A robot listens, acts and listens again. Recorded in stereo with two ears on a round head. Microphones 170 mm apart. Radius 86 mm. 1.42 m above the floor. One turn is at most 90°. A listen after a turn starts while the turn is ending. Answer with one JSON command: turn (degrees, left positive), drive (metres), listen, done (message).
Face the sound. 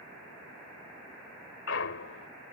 {"turn": 70}
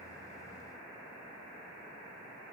{"listen": true}
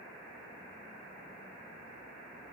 {"done": "I heard a clunk, but can't make it out now. It was about straight ahead or 40° left."}